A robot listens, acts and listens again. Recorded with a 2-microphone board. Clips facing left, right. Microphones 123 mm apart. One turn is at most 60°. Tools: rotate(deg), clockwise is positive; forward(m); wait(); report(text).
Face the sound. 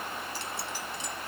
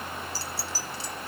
rotate(35)
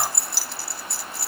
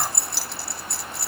report("Facing the keys jangling.")